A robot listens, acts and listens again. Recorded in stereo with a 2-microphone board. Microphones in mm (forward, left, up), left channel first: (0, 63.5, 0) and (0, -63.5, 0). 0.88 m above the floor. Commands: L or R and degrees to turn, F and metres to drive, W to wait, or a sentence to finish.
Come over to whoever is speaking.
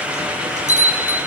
W
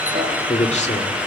L65
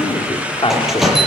L45
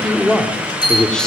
F1.0
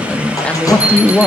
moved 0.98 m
L10
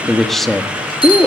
F1.0
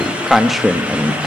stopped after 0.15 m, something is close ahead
Arrived at the man speaking, straight ahead.